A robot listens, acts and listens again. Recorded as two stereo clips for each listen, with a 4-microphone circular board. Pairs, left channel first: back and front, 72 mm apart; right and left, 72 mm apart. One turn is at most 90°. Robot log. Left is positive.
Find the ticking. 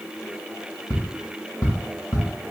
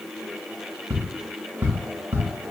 note: The ticking: 150° left.
cmd yaw +90
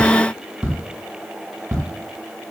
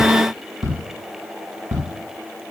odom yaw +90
note: The ticking is now 45° left.
cmd yaw +45
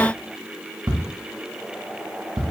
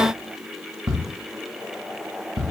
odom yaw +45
note: The ticking is now 10° left.
cmd yaw +10
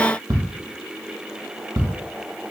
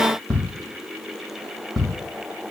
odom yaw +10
end: Facing the ticking.